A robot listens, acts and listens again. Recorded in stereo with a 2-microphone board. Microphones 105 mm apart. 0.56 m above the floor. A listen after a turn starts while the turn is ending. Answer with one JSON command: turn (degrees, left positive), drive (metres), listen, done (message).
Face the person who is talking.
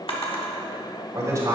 {"turn": -30}
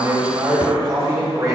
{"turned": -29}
{"turn": -35}
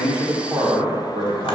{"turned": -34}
{"turn": -135}
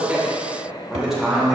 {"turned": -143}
{"done": "Facing the man speaking."}